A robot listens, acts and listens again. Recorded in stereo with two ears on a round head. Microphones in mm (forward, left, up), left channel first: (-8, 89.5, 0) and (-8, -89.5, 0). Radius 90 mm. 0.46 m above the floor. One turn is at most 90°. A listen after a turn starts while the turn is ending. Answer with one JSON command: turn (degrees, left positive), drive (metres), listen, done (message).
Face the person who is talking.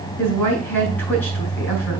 {"turn": 30}
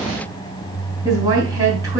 {"turn": -20}
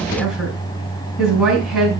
{"done": "Found it: a woman speaking, straight ahead, over 4 m away."}